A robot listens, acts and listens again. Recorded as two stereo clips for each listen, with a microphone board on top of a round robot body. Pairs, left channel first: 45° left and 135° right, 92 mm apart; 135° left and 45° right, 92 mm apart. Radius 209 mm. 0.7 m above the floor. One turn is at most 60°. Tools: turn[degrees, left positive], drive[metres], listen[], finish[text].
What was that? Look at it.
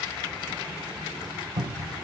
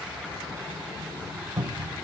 Thought: The cupboard door: 120° right.
Action: turn[-60]
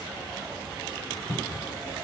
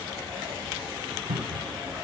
Thought: The cupboard door is now 50° right.
Action: turn[-50]
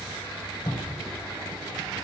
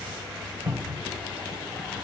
Thought: The cupboard door is now 10° left.
Action: turn[10]
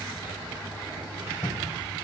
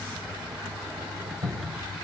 Action: finish[Found it: a cupboard door, straight ahead.]